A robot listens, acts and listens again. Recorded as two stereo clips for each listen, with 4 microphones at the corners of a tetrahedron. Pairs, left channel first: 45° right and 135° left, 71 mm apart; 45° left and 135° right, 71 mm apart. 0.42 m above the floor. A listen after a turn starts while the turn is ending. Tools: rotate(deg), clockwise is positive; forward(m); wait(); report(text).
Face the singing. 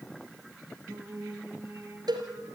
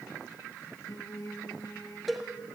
rotate(-90)
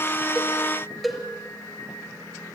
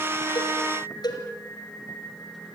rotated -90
rotate(15)
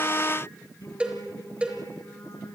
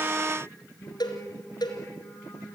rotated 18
rotate(10)
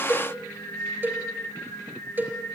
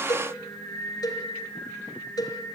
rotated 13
report("Facing the singing.")